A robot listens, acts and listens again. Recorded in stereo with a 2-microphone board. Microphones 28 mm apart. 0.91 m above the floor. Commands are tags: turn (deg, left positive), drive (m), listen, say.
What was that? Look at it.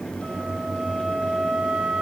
<turn deg="-60"/>
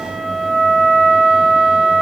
<turn deg="-15"/>
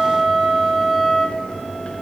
<say>Found it: a flute, straight ahead, 1 to 2 m away.</say>